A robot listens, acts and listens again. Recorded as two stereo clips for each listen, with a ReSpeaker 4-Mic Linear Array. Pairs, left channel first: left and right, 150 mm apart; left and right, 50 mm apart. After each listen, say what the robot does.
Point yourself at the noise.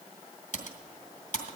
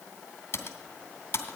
Turn 55° left.
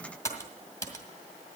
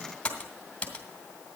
Turn 25° left.
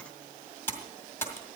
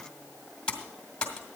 Turn 20° left.
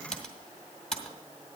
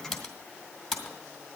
Found it: typing on a keyboard, straight ahead, 2 to 4 m away.